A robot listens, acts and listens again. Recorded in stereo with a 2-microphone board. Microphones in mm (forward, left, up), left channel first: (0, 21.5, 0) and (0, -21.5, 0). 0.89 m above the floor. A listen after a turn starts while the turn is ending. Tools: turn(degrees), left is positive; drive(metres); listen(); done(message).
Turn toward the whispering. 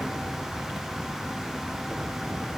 listen()
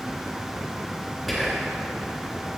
turn(degrees=30)
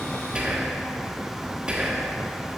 turn(degrees=-25)
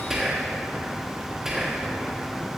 turn(degrees=-10)
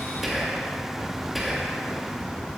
done("Facing the whispering, 1 to 2 m away.")